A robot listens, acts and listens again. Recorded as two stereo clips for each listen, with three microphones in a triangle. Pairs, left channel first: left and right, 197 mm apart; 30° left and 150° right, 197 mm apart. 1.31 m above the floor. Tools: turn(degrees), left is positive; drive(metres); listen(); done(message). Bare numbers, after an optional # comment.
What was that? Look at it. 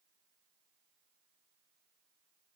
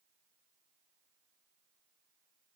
listen()
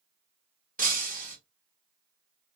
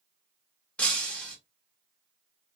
# The breaking glass: 55° right.
turn(-55)
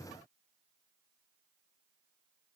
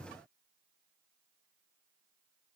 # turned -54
done("I heard breaking glass from this way, but can't make it out now.")